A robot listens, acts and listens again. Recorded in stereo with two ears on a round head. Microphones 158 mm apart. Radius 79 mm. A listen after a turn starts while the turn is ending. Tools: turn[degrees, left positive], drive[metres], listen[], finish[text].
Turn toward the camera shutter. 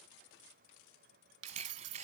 Thought: The camera shutter: about 40° right or 140° right.
Action: turn[-40]
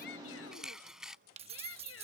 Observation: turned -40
Action: finish[Found it: a camera shutter, straight ahead.]